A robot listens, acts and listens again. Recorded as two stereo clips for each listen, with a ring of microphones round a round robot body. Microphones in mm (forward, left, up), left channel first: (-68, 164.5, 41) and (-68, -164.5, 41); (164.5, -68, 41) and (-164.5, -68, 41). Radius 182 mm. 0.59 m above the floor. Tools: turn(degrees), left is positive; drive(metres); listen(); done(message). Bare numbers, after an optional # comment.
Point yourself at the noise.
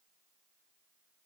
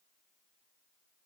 listen()
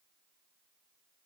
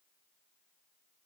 listen()
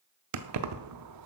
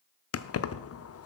# The keys jangling: 50° right.
turn(-50)
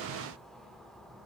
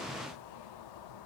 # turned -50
listen()
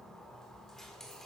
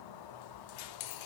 done("Facing the keys jangling.")